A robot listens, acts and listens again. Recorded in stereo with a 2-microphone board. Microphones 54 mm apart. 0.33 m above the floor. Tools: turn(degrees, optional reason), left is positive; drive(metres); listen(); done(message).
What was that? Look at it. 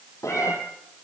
turn(degrees=90)
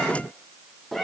done("Found it: a cat meowing, straight ahead.")